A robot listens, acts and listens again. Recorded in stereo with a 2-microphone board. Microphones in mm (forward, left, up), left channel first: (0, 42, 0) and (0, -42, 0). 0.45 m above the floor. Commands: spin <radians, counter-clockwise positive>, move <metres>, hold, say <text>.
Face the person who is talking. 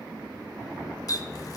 hold
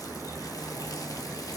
hold
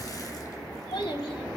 spin 1.57
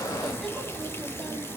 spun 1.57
hold
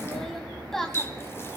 say Facing the child speaking.